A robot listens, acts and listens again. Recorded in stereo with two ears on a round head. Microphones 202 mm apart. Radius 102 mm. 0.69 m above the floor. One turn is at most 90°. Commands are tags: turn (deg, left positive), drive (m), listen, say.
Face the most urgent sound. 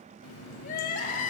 <turn deg="35"/>
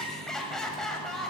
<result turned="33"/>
<say>Found it: crying, straight ahead, 1 to 2 m away.</say>